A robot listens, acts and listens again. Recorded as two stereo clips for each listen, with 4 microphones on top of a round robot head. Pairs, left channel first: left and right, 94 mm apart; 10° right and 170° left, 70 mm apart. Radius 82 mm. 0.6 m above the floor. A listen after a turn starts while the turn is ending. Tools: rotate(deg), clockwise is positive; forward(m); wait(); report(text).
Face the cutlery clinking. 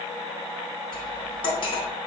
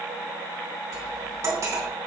rotate(-125)
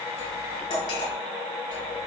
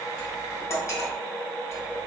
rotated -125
rotate(-40)
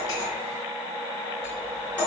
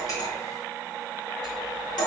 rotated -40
rotate(-10)
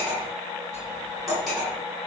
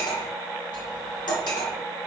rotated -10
report("Facing the cutlery clinking, 2 to 4 m away.")